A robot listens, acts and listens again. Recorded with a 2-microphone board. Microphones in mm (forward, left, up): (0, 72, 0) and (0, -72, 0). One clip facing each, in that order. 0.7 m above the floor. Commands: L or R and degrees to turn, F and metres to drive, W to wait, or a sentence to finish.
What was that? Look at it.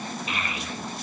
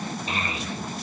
R30
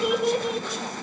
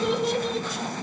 L15
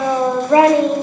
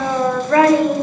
L25
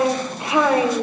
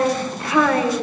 L25
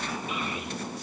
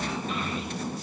W
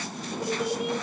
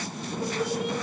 L20
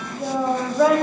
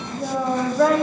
Facing the child speaking.